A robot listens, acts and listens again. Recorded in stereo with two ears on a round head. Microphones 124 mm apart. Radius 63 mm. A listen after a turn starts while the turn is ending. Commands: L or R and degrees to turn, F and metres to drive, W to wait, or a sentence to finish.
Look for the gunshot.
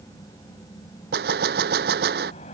R90
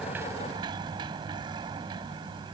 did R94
I heard a gunshot from this way, but can't make it out now.